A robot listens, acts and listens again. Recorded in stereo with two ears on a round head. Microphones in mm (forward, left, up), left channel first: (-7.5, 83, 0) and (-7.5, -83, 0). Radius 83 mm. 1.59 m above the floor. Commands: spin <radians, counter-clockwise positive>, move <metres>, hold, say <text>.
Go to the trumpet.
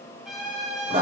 spin 0.52
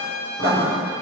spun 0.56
spin -0.52
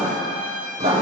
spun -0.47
move 1.0
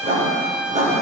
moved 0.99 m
move 1.0
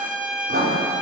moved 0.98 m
spin -0.17
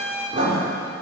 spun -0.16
move 1.0
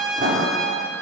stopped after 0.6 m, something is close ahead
say I am next to the trumpet.